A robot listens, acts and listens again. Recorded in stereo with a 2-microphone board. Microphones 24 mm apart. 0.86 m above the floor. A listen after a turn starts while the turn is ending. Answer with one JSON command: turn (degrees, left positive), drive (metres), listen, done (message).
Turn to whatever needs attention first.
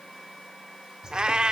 {"listen": true}
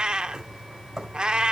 {"listen": true}
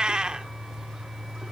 {"done": "I can't make out anything urgent, only a bird and a cat meowing."}